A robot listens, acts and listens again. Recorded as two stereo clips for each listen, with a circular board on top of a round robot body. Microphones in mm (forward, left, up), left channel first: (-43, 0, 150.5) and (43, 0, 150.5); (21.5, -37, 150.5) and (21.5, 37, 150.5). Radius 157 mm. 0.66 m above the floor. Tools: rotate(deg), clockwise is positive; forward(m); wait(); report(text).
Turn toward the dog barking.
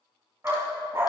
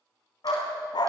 rotate(65)
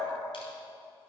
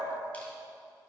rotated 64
wait()
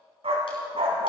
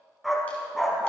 report("Found it: a dog barking, straight ahead, 1 to 2 m away.")